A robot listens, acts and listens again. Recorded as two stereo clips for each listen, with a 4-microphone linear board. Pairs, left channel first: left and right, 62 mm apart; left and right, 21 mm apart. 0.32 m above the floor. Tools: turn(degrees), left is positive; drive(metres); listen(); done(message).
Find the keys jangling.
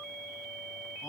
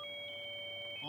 listen()
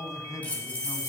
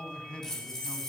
turn(degrees=20)
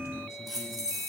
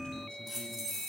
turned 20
done("Facing the keys jangling, over 4 m away.")